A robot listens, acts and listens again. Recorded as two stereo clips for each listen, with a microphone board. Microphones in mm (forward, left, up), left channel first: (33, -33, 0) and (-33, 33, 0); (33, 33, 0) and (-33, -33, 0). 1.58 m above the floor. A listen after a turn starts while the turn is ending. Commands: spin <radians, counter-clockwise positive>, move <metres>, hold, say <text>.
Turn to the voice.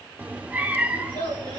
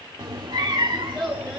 spin -0.79
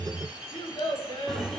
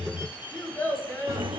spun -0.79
spin -0.26
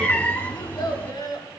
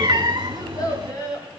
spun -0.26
say Facing the child speaking.